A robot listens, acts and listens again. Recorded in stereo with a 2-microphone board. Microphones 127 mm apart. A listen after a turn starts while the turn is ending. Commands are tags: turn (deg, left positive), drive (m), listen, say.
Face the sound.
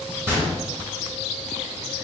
<turn deg="-20"/>
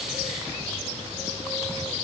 <listen/>
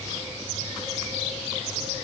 <say>I heard a gunshot, but can't make it out now. It was about straight ahead or 140° right.</say>